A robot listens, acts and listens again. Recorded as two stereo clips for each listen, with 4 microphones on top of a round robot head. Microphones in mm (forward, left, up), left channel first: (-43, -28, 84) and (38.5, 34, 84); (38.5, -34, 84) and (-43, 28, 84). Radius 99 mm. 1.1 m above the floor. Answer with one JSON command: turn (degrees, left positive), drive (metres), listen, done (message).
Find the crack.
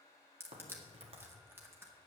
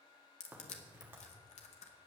{"turn": 70}
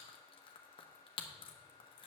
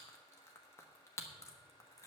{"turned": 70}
{"done": "Facing where the crack came from. I can't hear it now."}